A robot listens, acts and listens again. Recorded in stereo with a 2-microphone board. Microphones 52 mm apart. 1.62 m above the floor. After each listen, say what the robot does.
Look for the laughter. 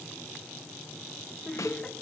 Turn 30° left.
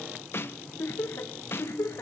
Turn 115° left.
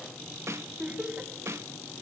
Turn 30° right.
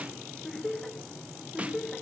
Turn 10° left.
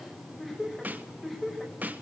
Facing the laughter, 2 to 4 m away.